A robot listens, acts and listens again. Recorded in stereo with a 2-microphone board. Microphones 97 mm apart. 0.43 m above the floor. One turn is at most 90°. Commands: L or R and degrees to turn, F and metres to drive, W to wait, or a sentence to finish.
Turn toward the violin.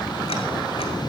W
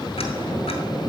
W
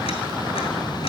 I can't make out a violin to turn to.